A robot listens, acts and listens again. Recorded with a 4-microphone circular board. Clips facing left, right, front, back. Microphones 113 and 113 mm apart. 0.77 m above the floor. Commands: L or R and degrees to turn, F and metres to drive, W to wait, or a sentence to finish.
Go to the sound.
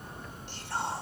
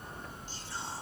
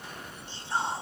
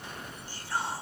L65
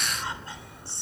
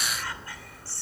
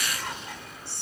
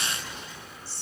L25
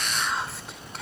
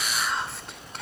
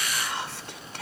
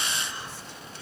F1.0
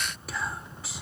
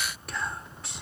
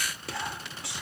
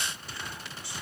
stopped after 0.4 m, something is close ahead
Blocked. The whispering is further on, straight ahead.